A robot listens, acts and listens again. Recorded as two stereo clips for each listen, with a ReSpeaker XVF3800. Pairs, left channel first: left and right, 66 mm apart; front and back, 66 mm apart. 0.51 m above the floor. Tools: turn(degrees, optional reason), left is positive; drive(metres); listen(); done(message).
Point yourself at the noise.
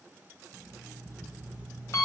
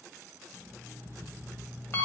turn(degrees=50, reason="The alarm clock: 50° left.")
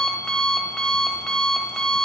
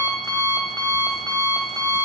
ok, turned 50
turn(degrees=10, reason="The alarm clock is now 10° left.")
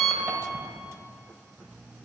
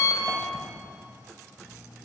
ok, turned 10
done("Facing the alarm clock.")